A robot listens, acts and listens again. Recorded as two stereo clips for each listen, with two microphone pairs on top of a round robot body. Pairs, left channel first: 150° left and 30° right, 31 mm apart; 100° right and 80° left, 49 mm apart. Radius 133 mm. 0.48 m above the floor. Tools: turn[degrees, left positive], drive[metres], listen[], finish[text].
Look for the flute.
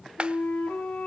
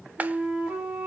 Thought: The flute: 140° left.
Action: turn[140]
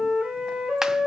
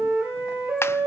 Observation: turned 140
Thought: The flute is now 15° left.
Action: turn[15]
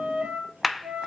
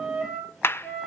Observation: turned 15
Action: finish[Found it: a flute, straight ahead, over 4 m away.]